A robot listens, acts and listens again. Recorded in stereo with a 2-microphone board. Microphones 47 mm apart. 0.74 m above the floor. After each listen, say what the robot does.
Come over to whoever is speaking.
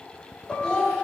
Turn 30° left.
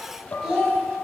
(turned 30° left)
Turn 15° right.
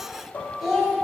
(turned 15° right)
Drive 1.0 m forward.
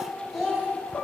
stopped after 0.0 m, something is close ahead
Blocked. The child speaking is further on, straight ahead.